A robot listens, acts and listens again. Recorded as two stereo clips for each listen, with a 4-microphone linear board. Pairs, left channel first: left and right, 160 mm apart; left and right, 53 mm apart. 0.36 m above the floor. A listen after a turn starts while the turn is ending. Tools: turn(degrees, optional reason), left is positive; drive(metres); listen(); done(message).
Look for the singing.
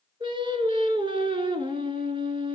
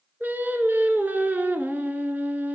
turn(degrees=-35, reason="The singing: about 35° right or 145° right.")
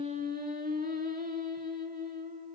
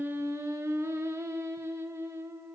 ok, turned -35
turn(degrees=-115, reason="So it is at 115° right.")
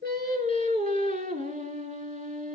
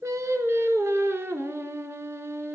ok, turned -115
turn(degrees=-55, reason="The singing is now 55° right.")
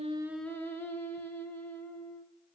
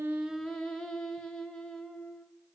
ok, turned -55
turn(degrees=15, reason="The singing is now 15° left.")
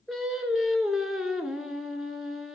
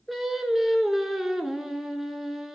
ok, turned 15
done("Facing the singing.")